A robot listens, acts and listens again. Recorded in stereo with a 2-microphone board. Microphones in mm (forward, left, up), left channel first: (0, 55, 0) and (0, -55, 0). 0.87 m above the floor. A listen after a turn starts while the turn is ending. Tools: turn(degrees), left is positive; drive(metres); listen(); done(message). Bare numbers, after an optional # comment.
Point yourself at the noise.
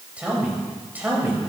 # The man speaking: about 15° right or 165° right.
turn(-15)
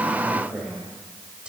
turn(-30)
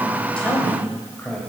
# So it is at 15° left.
turn(15)
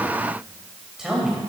done("Found it: a man speaking, straight ahead, 2 to 4 m away.")